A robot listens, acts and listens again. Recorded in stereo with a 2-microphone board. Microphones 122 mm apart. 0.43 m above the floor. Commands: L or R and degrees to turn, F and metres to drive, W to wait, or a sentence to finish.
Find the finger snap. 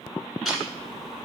W
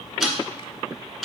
W
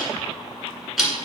I can't make out a finger snap to turn to.